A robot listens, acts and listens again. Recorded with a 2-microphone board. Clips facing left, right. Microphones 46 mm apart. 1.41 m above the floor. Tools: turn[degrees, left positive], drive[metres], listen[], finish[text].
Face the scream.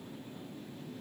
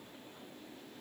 Action: listen[]
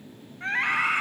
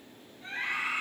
Thought: The scream: about 65° left or 115° left.
Action: turn[65]
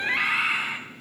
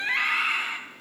Action: finish[Found it: a scream, straight ahead.]